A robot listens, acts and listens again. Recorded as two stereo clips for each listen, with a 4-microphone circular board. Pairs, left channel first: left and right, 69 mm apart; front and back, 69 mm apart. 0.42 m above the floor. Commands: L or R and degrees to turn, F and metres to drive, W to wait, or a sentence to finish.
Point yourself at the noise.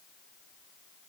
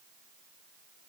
W
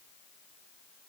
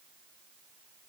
W
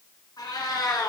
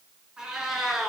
L95
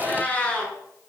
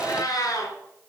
L15
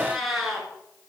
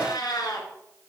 Facing the cat meowing, 2 to 4 m away.